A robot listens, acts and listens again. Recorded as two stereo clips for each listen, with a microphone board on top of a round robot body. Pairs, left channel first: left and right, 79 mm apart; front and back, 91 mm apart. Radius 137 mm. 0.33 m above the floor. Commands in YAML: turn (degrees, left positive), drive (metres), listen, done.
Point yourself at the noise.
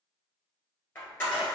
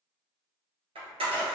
turn: 155
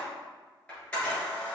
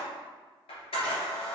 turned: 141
turn: 15
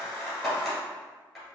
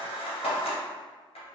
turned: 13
done: "Facing the camera shutter, 1 to 2 m away."